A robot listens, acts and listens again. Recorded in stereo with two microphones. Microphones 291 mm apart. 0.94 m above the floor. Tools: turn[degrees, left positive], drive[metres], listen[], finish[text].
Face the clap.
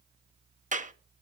Thought: The clap: about 25° right or 155° right.
Action: turn[-25]
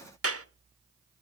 Thought: So it is at 125° right.
Action: turn[-125]
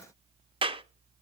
Thought: The clap is now 20° right.
Action: turn[-20]
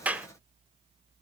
Action: finish[Found it: a clap, straight ahead.]